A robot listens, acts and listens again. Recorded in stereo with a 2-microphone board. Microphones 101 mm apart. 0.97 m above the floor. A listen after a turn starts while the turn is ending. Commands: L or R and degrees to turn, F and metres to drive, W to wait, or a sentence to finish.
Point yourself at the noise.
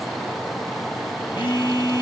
L45
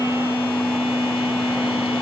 L80
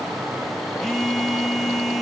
Facing the phone buzzing.